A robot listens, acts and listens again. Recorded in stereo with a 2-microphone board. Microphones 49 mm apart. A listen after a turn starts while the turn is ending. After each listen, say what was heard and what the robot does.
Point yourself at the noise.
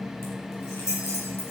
The keys jangling: about 65° left or 115° left. Turn 65° left.
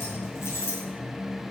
So it is at 55° left. Turn 55° left.
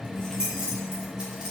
The keys jangling is now 20° right. Turn 20° right.
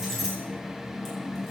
Found it: keys jangling, straight ahead, over 4 m away.